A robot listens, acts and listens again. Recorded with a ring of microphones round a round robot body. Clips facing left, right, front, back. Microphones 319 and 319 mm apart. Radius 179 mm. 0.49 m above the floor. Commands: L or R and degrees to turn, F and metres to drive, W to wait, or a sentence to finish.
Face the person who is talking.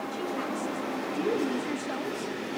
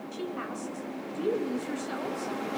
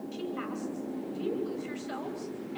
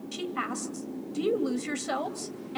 L175
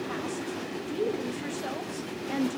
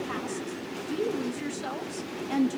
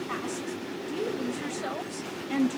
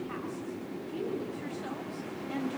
R20
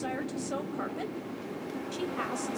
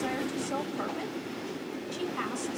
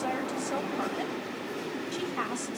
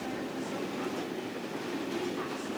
Found it: a woman speaking, straight ahead.